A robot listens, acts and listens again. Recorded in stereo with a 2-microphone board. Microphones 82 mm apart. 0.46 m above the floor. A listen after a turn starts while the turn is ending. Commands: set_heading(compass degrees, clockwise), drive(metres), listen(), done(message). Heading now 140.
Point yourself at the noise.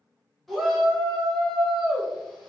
set_heading(110)
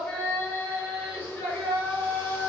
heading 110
set_heading(320)
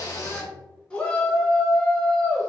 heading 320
set_heading(305)
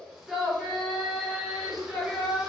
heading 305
done("Facing the shout.")